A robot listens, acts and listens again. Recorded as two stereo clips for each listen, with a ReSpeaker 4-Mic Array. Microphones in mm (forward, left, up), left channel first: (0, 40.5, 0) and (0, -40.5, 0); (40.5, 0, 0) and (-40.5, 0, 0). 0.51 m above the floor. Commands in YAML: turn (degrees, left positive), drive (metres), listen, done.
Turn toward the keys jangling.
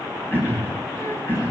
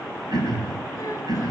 listen: true
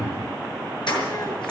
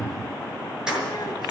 turn: 100
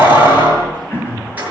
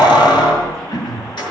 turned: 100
turn: -25
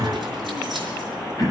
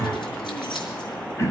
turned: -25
listen: true
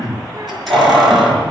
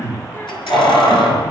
done: "Facing the keys jangling, over 4 m away."